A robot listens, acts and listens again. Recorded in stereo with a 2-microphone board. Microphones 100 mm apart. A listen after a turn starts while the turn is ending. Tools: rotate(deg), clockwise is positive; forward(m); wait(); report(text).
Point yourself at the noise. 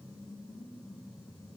wait()
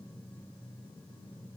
wait()
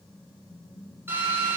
rotate(20)
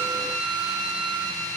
rotate(140)
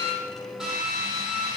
report("Facing the drill.")